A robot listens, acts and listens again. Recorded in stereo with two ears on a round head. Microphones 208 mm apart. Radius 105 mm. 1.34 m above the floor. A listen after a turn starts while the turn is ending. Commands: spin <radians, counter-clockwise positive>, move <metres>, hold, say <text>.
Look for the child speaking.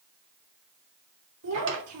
spin -1.22
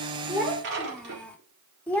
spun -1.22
say Found it: a child speaking, straight ahead, 2 to 4 m away.